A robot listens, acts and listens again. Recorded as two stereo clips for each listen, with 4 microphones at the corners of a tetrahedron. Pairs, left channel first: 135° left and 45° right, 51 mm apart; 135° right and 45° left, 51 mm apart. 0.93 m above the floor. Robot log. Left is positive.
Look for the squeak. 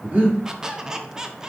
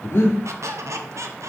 note: The squeak: 35° left.
cmd yaw +35
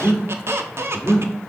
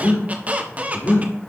note: The squeak is now 15° right.
cmd yaw -15
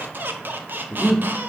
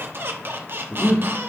end: Found it: a squeak, straight ahead, 1 to 2 m away.